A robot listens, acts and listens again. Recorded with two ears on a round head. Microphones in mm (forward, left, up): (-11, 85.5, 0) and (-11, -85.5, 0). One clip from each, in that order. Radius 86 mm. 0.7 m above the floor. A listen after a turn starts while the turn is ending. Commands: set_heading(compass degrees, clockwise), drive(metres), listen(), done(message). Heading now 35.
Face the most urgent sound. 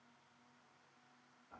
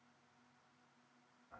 listen()
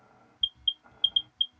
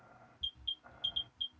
set_heading(5)
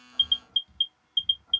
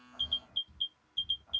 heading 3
set_heading(228)
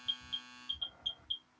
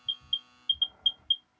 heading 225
done("Found it: an alarm, straight ahead.")